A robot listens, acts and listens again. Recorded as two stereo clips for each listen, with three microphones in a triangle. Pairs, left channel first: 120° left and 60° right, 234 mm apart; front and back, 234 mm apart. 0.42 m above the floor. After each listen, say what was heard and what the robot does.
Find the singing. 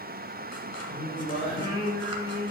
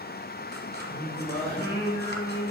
The singing: 70° left. Turn 70° left.
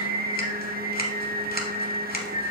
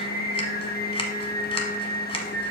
The singing is now 15° left. Turn 15° left.
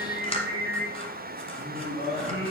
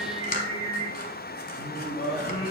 Found it: singing, straight ahead, over 4 m away.